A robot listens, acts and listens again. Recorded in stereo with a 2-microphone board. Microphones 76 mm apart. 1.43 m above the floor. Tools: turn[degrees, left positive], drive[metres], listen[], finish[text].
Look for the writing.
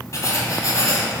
Thought: The writing: about 45° left or 135° left.
Action: turn[45]
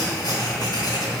Thought: So it is at 85° left.
Action: turn[85]
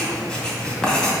Thought: The writing is now 10° left.
Action: turn[10]
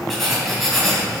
Action: finish[Facing the writing, 2 to 4 m away.]